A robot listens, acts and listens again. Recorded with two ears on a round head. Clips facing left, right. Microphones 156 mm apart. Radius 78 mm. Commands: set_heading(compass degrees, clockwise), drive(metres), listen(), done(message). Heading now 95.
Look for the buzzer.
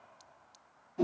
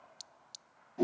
listen()
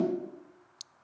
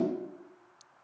listen()
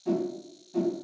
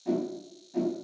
done("I can't make out a buzzer, only a whoosh.")